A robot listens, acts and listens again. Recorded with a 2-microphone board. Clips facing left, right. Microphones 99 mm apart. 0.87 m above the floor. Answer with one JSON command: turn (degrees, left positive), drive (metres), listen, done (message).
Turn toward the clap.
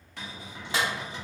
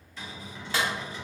{"turn": 20}
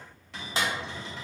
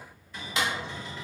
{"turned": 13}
{"turn": 145}
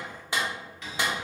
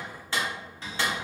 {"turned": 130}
{"turn": 15}
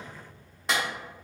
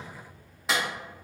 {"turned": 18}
{"done": "Found it: a clap, straight ahead."}